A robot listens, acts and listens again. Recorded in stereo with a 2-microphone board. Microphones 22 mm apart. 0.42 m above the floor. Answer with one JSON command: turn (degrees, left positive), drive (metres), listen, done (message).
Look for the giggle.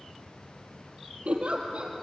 {"turn": -90}
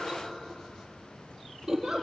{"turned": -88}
{"turn": -10}
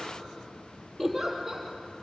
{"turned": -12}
{"done": "Facing the giggle."}